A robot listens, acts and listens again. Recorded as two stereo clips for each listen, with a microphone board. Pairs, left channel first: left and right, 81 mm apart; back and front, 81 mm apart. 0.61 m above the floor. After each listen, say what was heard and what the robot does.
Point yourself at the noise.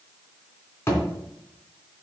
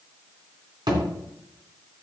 The thud: 30° left. Turn 30° left.
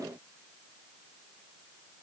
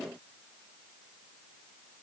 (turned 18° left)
Nothing new. It was at 10° left. Turn 10° left.
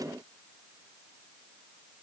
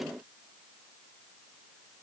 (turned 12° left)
I heard a thud from this way, but can't make it out now.